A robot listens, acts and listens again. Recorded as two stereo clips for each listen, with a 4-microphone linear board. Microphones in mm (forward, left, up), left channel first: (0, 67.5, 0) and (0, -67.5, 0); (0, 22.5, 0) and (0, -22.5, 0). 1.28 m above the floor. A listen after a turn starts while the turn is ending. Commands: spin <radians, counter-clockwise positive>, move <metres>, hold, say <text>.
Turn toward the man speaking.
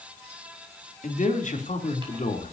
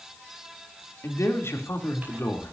spin 1.13
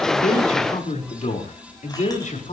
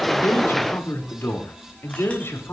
spin 1.13
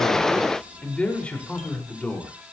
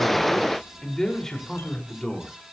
spin 0.17
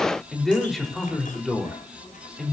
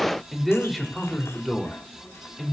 say Facing the man speaking.